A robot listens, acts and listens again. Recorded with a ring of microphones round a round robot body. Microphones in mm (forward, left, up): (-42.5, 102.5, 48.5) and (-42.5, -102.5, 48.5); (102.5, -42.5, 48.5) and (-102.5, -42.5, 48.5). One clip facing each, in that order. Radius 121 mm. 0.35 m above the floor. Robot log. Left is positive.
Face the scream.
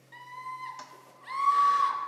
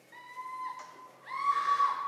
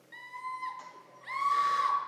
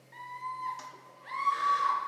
note: The scream: 45° left.
cmd yaw +45
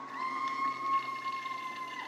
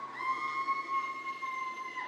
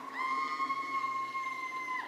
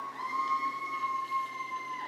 end: Found it: a scream, straight ahead.